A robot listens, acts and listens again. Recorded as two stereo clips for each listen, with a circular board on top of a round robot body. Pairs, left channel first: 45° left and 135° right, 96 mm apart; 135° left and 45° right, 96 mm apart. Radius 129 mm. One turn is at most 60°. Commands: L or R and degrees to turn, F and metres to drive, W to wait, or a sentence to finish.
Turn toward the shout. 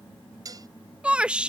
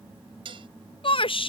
L60
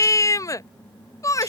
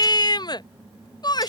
L60
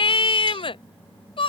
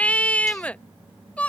L60
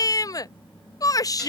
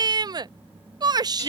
Facing the shout.